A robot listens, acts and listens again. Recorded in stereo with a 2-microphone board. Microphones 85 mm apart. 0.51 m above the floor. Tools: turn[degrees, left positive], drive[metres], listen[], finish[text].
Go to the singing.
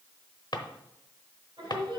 Thought: The singing: about 60° right or 120° right.
Action: turn[-60]
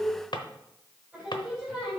Thought: So it is at 10° right.
Action: turn[-10]
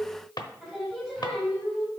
Action: drive[1.0]
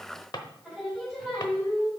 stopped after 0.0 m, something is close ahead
Action: finish[Blocked. The singing is further on, straight ahead.]